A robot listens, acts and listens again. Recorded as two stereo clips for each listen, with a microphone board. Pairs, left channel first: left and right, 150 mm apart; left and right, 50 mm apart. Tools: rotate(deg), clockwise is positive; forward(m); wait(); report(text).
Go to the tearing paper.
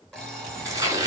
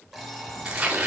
rotate(20)
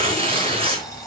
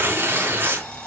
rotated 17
rotate(140)
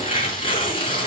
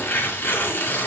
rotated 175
rotate(-35)
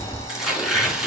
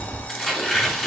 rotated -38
forward(1.0)
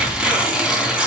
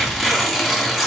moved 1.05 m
forward(1.0)
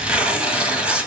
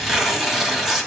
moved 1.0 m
forward(1.0)
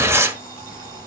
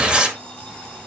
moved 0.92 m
rotate(20)
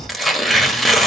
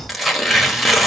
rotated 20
forward(1.0)
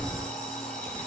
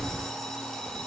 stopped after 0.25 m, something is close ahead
wait()
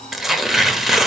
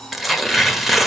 report("Arrived at the tearing paper, straight ahead.")